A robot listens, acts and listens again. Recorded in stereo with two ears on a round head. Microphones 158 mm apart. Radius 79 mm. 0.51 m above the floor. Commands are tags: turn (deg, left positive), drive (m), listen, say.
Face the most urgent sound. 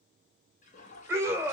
<turn deg="-30"/>
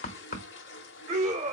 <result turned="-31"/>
<turn deg="-130"/>
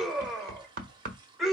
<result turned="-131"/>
<say>Found it: a scream, straight ahead, 1 to 2 m away.</say>